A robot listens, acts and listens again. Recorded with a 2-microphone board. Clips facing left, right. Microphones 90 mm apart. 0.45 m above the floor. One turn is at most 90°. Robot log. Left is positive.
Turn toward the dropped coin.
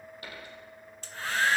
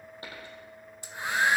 note: The dropped coin: about 30° right or 150° right.
cmd yaw -30
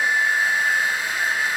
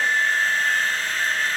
cmd idle
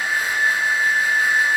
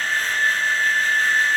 end: I heard a dropped coin, but can't make it out now. It was about straight ahead or 120° right.